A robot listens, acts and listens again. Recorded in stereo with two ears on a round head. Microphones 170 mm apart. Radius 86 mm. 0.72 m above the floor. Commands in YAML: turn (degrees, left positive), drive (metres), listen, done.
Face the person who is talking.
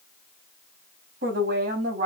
turn: -45
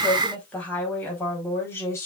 turn: 15
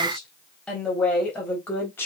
turn: 10
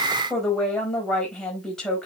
done: "Found it: a woman speaking, straight ahead, over 4 m away."